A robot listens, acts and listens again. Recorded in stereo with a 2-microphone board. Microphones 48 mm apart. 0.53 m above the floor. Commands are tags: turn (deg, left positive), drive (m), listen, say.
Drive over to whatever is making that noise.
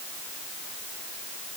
<listen/>
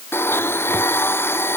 <turn deg="55"/>
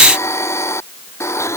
<turn deg="70"/>
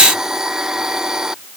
<turn deg="-15"/>
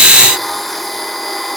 <drive m="1.0"/>
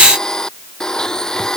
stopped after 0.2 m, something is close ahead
<turn deg="10"/>
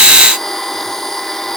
<say>Something is in my way. I am facing the blender but have not reached it.</say>